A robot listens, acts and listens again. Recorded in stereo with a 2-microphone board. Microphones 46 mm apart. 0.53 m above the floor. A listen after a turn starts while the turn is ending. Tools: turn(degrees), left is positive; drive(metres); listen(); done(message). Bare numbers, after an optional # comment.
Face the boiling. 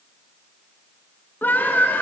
listen()
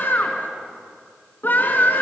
listen()
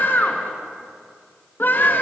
done("I can't make out boiling to turn to.")